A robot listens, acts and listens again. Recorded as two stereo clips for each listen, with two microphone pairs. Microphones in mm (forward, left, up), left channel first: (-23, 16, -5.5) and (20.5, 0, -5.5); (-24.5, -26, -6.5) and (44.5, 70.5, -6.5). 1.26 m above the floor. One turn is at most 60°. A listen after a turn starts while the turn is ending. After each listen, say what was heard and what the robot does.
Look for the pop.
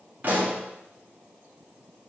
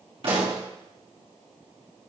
The pop: 25° left. Turn 25° left.
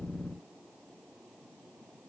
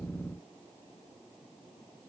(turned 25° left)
Facing where the pop came from. I can't hear it now.